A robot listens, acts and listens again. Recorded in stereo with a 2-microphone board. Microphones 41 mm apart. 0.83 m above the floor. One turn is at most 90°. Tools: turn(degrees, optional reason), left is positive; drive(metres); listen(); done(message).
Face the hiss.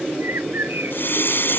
turn(degrees=60, reason="The hiss: about 60° left or 120° left.")
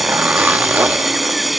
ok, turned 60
done("Found it: a hiss, straight ahead.")